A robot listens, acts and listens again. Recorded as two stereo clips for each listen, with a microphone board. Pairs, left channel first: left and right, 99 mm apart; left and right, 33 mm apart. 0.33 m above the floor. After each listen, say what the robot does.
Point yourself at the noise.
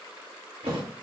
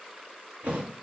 Turn 75° right.
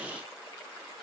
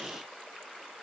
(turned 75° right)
Keep listening.
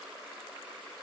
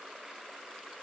I heard a thud, but can't make it out now. It was about straight ahead or 30° right.